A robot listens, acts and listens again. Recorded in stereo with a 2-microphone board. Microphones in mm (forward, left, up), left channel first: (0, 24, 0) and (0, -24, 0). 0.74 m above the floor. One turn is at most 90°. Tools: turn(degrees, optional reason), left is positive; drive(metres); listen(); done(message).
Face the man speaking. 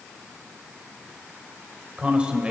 turn(degrees=-20, reason="The man speaking: about 20° right or 160° right.")
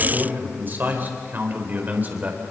turn(degrees=-35, reason="The man speaking: about 35° right or 145° right.")
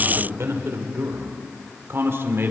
turn(degrees=-90, reason="So it is at 125° right.")
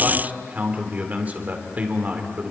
turn(degrees=-30, reason="The man speaking is now 30° right.")
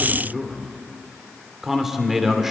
done("Facing the man speaking, 2 to 4 m away.")